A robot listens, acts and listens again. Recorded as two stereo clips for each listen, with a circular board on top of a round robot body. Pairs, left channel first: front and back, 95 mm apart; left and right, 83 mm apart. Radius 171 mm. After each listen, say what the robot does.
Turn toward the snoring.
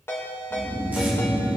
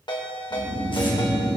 Turn 90° right.
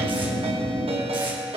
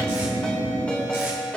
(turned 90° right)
Turn 10° left.
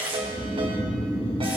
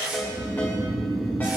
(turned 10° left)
Found it: snoring, straight ahead.